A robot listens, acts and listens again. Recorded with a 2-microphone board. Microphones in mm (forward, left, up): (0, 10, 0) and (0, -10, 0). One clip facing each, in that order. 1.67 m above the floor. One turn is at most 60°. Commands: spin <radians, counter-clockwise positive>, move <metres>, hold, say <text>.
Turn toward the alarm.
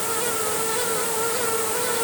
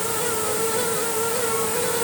hold
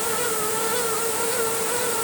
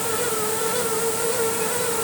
hold
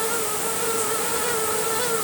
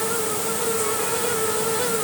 say I can't make out an alarm to turn to.